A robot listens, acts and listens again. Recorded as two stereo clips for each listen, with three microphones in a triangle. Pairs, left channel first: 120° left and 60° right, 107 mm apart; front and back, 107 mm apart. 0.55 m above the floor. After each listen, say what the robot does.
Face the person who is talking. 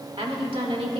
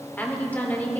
Turn 70° right.
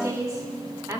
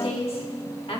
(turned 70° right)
Turn 10° right.
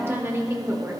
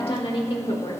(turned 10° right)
Found it: a woman speaking, straight ahead.